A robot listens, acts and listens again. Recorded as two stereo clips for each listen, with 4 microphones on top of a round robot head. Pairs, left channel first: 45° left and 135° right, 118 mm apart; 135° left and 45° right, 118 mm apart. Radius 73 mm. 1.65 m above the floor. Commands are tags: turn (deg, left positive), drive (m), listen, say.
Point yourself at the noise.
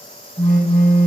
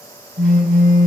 <turn deg="-20"/>
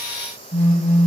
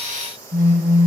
<say>Facing the phone buzzing, over 4 m away.</say>